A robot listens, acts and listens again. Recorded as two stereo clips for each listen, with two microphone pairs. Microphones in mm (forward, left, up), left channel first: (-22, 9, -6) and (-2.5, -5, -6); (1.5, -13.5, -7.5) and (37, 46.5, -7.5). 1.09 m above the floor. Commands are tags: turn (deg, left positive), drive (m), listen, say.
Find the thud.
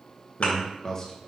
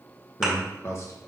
<turn deg="150"/>
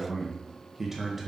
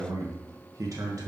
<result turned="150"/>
<say>I heard a thud from this way, but can't make it out now.</say>